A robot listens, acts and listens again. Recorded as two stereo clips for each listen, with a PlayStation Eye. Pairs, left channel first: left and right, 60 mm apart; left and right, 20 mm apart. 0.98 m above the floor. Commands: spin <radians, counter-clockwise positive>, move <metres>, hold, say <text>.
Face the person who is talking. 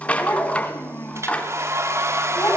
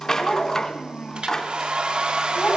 spin 0.52
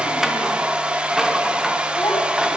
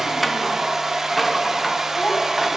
hold
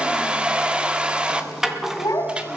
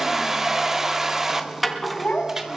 spin 2.09
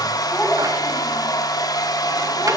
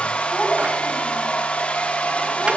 hold
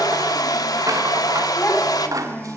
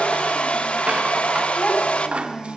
spin 0.35
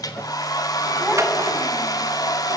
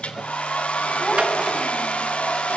hold
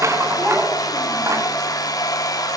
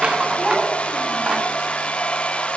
hold
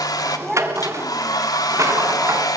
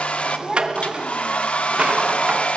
say Found it: a child speaking, straight ahead.